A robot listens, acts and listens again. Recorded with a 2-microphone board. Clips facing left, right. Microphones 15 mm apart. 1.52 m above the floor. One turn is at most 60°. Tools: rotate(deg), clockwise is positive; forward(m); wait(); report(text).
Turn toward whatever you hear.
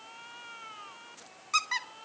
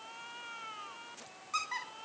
rotate(-60)
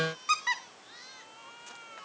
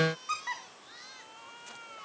rotate(-60)
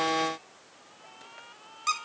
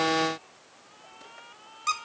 report("Facing the squeak.")